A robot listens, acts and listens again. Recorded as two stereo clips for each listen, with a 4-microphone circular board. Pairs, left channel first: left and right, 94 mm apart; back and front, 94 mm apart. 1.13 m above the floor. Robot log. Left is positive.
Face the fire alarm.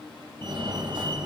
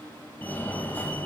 note: The fire alarm: 115° right.
cmd yaw -115
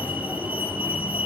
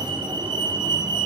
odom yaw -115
note: The fire alarm is now 20° right.
cmd yaw -20
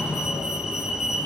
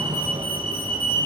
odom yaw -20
note: The fire alarm is now 10° right.
cmd yaw -10
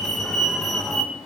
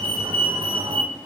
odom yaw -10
end: Facing the fire alarm, 2 to 4 m away.